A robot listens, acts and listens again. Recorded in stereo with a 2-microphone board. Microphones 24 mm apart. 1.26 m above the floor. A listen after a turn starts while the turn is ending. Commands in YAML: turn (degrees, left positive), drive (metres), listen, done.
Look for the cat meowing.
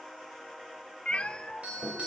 turn: 55
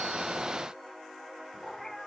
turn: 15
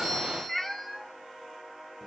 done: "Facing the cat meowing, under 1 m away."